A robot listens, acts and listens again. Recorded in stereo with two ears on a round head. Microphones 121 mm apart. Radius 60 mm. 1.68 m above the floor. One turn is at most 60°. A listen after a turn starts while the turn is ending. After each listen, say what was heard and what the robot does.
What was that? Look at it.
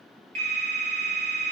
The phone ringing: about 55° right or 125° right. Turn 55° right.
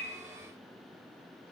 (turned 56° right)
Keep listening.
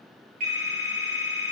So it is at 65° right. Turn 60° right.
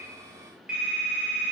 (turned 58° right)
The phone ringing is now 10° right. Turn 10° right.
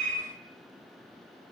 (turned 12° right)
Keep listening.
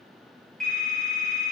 Facing the phone ringing, 2 to 4 m away.